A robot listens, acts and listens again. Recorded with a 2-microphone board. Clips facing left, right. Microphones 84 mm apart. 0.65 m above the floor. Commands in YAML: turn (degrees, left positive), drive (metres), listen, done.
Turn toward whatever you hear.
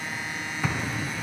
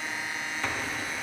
turn: 30
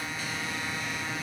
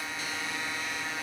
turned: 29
listen: true
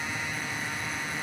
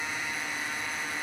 done: "I heard an explosion, but can't make it out now. It was about 20° right or 145° left."